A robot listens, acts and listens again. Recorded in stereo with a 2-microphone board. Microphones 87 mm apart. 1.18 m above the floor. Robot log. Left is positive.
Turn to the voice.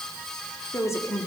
note: The woman speaking: about 35° left or 145° left.
cmd yaw +35
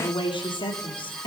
note: So it is at 110° left.
cmd yaw +110
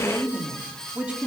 note: The woman speaking is now 15° right.
cmd yaw -15
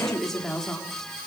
end: Facing the woman speaking, 2 to 4 m away.